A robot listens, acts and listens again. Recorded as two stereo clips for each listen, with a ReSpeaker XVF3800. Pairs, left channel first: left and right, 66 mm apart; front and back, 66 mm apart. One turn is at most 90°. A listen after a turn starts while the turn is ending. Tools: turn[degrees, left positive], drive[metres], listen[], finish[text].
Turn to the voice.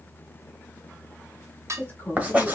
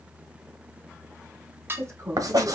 Thought: The woman speaking: 150° left.
Action: turn[90]
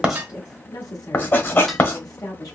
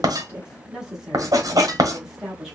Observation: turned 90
Thought: The woman speaking is now 95° left.
Action: turn[90]
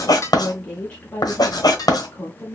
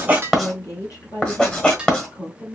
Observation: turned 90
Thought: The woman speaking is now 20° left.
Action: turn[20]
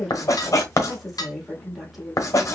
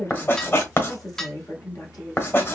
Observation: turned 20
Action: finish[Found it: a woman speaking, straight ahead, 1 to 2 m away.]